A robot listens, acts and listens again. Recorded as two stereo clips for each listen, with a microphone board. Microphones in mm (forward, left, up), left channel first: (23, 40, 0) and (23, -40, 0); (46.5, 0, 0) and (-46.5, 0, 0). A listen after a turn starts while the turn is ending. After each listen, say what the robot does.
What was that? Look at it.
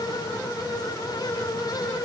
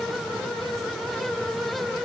Keep listening.
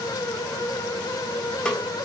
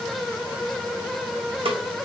Turn 170° left.
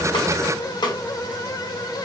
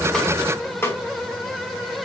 Turn 65° left.
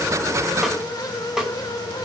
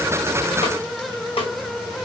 Facing the snare drum, 1 to 2 m away.